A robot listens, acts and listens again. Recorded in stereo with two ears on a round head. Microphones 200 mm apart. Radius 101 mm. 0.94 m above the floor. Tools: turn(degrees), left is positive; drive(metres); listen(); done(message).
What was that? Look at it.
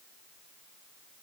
listen()
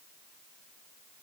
listen()
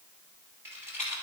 turn(degrees=-30)
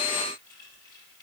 listen()
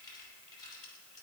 listen()
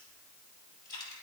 turn(degrees=20)
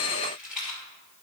done("Facing the rattle.")